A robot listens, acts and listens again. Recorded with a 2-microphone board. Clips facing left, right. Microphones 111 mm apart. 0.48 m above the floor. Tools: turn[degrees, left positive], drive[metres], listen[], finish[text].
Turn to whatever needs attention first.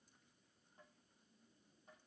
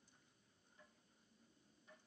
Action: listen[]
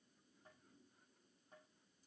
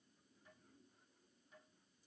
Action: listen[]
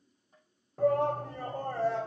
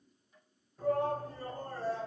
Thought: The shout: about 70° left or 110° left.
Action: turn[70]
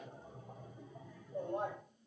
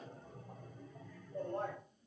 Thought: So it is at 15° left.
Action: turn[15]
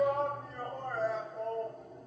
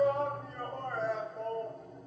Action: finish[Facing the shout, 2 to 4 m away.]